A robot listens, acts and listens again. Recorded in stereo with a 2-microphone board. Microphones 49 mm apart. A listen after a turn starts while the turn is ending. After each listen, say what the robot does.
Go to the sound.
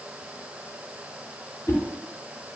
Turn 50° left.
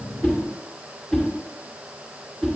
Drive 1.0 m forward.
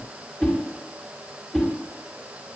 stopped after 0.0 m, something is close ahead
Something is in my way. I am facing the whoosh but have not reached it.